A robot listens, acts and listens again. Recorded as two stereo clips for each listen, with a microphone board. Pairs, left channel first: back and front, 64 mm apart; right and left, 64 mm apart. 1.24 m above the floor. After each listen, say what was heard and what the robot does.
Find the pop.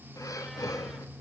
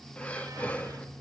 Keep listening.
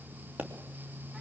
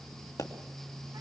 The pop: 65° right. Turn 65° right.
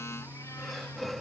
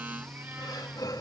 I heard a pop from this way, but can't make it out now.